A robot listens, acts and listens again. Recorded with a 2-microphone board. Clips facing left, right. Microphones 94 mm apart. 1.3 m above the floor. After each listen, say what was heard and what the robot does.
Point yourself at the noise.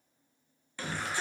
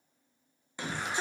The shout: about 20° right or 160° right. Turn 20° right.
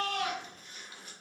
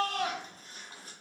So it is at 145° right. Turn 145° right.
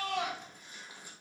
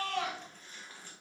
The shout is now 15° left. Turn 15° left.
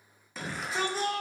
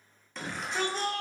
Found it: a shout, straight ahead.